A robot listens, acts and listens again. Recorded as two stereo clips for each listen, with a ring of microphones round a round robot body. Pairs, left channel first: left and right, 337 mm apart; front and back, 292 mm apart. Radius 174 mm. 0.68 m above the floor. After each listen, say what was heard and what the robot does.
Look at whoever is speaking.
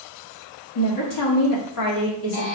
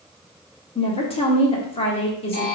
The woman speaking: 70° left. Turn 70° left.
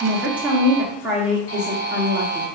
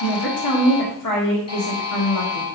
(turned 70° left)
Facing the woman speaking.